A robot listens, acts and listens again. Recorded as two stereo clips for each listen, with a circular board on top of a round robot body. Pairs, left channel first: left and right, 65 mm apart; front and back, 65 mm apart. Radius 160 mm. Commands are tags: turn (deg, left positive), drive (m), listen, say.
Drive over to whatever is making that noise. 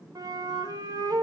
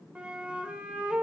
<turn deg="-105"/>
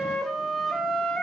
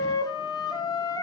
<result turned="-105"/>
<drive m="1.0"/>
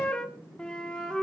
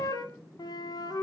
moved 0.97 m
<turn deg="15"/>
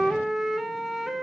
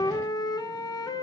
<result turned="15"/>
<drive m="1.0"/>
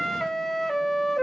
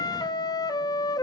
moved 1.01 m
<drive m="1.0"/>
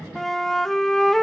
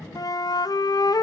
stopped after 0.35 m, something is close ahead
<say>Arrived at the flute, straight ahead.</say>